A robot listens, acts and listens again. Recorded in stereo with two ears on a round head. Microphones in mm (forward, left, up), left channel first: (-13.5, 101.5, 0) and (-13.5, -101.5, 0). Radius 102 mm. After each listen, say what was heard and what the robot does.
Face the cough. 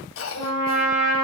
The cough: about 65° left or 115° left. Turn 65° left.
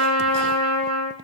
Keep listening.
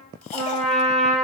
So it is at 35° left. Turn 35° left.
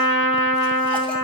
Keep listening.
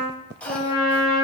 Found it: a cough, straight ahead.